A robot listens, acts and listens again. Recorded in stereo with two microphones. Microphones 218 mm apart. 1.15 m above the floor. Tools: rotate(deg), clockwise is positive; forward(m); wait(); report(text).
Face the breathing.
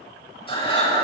rotate(-25)
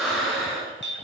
report("Facing the breathing, 2 to 4 m away.")